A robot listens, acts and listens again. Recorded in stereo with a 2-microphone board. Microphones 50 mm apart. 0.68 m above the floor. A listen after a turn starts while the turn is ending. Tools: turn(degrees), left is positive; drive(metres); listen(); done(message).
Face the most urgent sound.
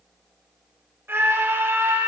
turn(degrees=-50)
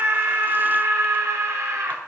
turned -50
turn(degrees=-80)
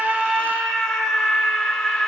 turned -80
done("Found it: a scream, straight ahead, 2 to 4 m away.")